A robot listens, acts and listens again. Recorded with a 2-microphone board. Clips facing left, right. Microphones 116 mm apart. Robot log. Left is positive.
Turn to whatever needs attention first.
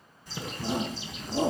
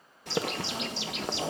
note: The shout: about 60° left or 120° left.
cmd yaw +60
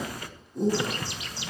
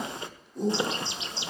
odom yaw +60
end: Found it: a shout, straight ahead, 2 to 4 m away.